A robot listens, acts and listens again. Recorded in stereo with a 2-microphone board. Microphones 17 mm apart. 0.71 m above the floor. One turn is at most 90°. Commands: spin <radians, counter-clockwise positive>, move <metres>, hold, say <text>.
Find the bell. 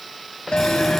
spin 1.57
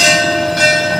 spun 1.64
say Found it: a bell, straight ahead, 1 to 2 m away.